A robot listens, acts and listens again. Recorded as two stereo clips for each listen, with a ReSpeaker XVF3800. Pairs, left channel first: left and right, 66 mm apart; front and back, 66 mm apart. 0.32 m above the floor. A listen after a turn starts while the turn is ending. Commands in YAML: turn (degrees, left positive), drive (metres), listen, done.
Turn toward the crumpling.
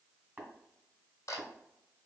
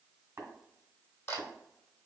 listen: true
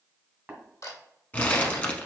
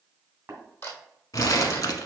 turn: 25
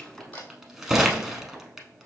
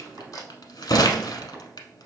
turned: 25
done: "Facing the crumpling, under 1 m away."